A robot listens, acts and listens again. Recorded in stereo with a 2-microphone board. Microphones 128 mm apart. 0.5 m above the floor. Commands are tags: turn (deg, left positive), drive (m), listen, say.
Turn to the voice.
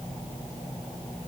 <listen/>
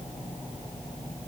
<listen/>
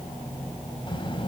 <turn deg="40"/>
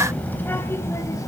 <turn deg="25"/>
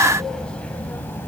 <turn deg="15"/>
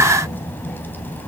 <turn deg="15"/>
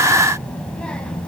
<turn deg="10"/>
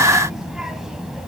<say>Found it: a child speaking, straight ahead.</say>